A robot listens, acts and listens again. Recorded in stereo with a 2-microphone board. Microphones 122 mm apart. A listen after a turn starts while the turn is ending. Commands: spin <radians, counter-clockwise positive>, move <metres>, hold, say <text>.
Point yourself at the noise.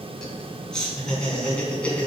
spin 0.52
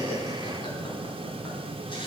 hold
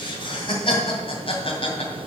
spin 2.27
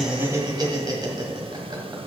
spin -0.61
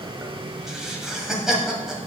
say Facing the laughter.